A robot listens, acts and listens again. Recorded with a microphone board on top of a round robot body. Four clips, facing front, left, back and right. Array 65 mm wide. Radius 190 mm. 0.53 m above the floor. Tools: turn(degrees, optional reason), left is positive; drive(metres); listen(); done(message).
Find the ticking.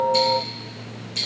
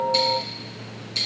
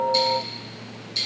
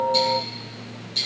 turn(degrees=70, reason="The ticking: 70° left.")
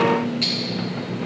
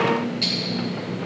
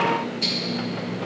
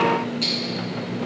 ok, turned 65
done("Facing the ticking, 2 to 4 m away.")